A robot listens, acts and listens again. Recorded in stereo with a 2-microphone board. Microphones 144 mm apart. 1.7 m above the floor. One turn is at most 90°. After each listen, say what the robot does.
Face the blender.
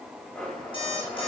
Turn 30° left.
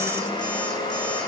Turn 90° left.
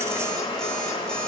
Turn 40° left.
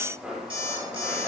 Facing the blender, over 4 m away.